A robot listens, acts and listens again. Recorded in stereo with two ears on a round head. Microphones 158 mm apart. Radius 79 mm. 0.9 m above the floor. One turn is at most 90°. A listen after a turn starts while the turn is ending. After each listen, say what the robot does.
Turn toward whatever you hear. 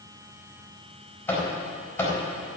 Turn 30° left.
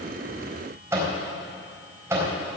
Turn 15° right.
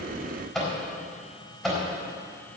Facing the microwave, 2 to 4 m away.